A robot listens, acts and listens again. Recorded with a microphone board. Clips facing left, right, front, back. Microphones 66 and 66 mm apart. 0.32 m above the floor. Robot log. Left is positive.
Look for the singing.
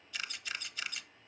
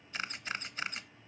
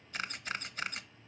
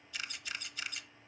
cmd idle
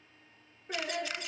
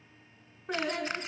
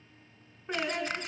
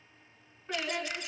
note: The singing: 70° right.
cmd yaw -70
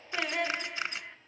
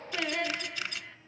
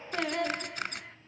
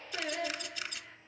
note: The singing is now 20° left.
cmd yaw +20
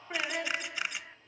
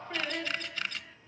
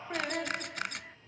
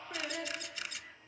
note: The singing is now 25° left.
cmd yaw +25
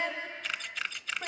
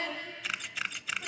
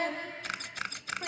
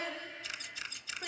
note: The singing is now 40° left.
cmd yaw +40
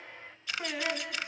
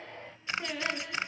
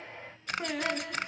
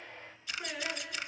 note: The singing is now 15° left.
cmd yaw +15
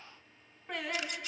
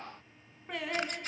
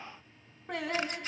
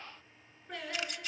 end: Found it: singing, straight ahead.